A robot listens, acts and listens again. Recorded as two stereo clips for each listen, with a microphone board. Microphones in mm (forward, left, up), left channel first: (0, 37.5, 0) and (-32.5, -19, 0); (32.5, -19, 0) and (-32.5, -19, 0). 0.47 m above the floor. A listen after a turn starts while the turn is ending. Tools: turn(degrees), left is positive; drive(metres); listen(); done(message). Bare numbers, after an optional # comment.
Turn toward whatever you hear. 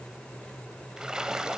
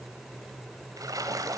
# The splash: 160° left.
turn(160)
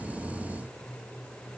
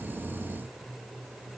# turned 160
done("Facing where the splash came from. I can't hear it now.")